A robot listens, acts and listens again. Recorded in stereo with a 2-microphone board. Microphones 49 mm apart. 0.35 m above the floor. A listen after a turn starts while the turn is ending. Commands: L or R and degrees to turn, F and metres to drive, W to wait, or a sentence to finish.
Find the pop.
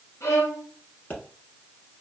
L30
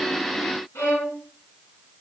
W
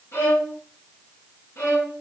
I heard a pop, but can't make it out now. It was about straight ahead or 120° left.